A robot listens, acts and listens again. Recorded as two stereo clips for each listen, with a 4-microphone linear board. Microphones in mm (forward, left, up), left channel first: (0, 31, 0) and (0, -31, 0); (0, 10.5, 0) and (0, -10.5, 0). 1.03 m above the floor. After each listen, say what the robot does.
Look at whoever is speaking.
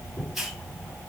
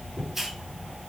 Keep listening.
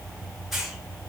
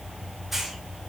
Keep listening.
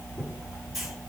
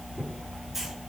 I can't make out anyone speaking, only a hiss.